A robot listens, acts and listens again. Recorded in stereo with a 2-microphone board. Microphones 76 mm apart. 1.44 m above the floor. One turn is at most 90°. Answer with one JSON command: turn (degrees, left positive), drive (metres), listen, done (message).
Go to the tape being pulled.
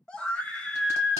{"listen": true}
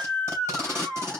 {"turn": -35}
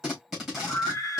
{"drive": 1.0}
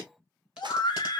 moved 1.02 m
{"listen": true}
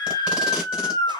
{"listen": true}
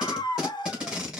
{"turn": -10}
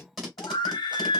{"drive": 1.0}
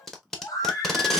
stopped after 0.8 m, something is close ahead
{"done": "I am next to the tape being pulled."}